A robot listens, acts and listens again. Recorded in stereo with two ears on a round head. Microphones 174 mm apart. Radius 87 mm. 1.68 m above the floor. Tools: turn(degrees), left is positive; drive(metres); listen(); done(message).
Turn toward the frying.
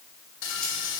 turn(degrees=70)
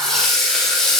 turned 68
done("Found it: frying, straight ahead, 1 to 2 m away.")